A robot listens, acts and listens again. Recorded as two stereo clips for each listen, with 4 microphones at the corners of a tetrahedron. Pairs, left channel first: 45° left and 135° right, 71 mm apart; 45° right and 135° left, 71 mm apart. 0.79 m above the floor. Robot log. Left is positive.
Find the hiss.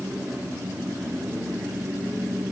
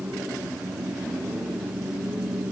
cmd idle
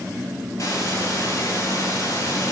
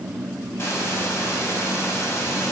note: The hiss: 10° left.
cmd yaw +10
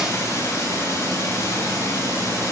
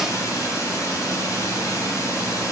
end: Found it: a hiss, straight ahead.